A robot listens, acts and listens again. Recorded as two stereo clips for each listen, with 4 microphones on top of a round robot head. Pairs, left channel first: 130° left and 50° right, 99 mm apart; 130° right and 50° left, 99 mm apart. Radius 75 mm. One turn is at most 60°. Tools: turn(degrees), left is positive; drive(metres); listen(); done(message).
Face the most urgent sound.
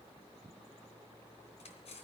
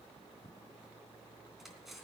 listen()
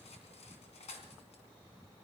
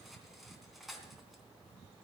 listen()
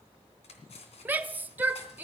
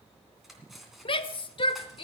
turn(degrees=-60)
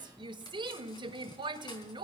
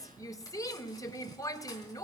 turn(degrees=-60)
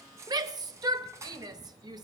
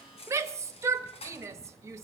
turn(degrees=-10)
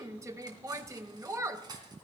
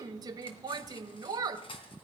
done("Facing the shout, 1 to 2 m away.")